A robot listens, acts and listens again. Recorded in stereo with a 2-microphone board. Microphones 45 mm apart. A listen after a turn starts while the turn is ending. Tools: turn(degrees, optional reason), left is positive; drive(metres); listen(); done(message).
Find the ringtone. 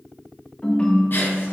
turn(degrees=20, reason="The ringtone: about 20° left or 160° left.")
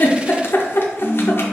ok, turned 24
turn(degrees=135, reason="So it is at 135° left.")
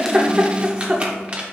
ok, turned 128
listen()
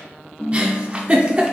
done("Found it: a ringtone, straight ahead, under 1 m away.")